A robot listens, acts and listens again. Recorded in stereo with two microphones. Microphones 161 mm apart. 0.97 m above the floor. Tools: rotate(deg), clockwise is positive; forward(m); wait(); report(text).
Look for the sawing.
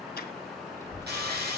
rotate(90)
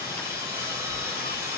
rotate(15)
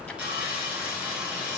report("Facing the sawing, over 4 m away.")